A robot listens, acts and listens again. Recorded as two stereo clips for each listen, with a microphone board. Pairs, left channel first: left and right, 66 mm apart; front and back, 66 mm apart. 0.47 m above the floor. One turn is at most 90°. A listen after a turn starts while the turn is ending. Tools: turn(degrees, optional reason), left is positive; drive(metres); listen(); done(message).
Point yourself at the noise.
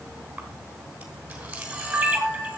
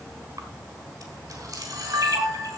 turn(degrees=-90, reason="The camera shutter: 160° right.")
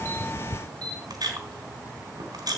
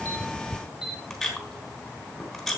turn(degrees=-90, reason="The camera shutter is now 90° right.")
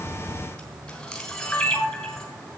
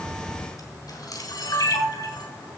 turn(degrees=10, reason="The camera shutter is now 10° left.")
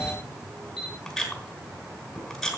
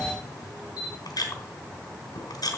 done("Facing the camera shutter.")